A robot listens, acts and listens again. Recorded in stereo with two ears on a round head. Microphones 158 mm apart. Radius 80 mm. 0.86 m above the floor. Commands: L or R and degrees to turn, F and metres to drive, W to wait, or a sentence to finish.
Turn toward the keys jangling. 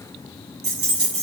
R30
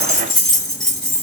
Found it: keys jangling, straight ahead, 1 to 2 m away.